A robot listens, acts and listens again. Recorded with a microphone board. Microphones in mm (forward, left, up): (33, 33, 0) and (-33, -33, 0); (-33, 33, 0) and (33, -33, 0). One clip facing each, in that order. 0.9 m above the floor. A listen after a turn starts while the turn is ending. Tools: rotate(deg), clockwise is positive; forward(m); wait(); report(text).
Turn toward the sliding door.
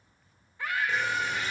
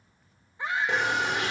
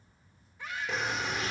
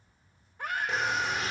rotate(135)
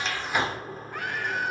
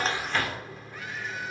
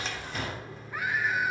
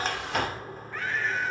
report("Found it: a sliding door, straight ahead.")